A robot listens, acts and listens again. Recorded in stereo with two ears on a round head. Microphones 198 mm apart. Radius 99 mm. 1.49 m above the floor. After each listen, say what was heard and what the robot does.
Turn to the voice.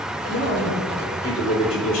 The man speaking: about 65° left or 115° left. Turn 65° left.
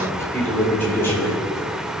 So it is at 10° left. Turn 10° left.
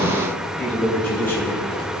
The man speaking is now 10° left. Turn 10° left.
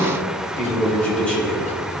Facing the man speaking, over 4 m away.